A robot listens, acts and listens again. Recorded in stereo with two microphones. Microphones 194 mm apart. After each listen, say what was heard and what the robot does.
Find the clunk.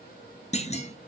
The clunk: about 35° left or 145° left. Turn 35° left.
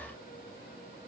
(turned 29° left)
Keep listening.
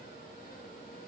I heard a clunk, but can't make it out now. It was about 5° left or 115° left.